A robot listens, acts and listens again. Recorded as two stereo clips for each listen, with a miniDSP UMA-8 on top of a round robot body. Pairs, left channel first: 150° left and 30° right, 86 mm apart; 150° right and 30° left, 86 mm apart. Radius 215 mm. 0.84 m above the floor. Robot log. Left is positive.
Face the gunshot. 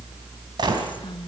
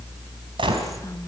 end: Found it: a gunshot, straight ahead, 2 to 4 m away.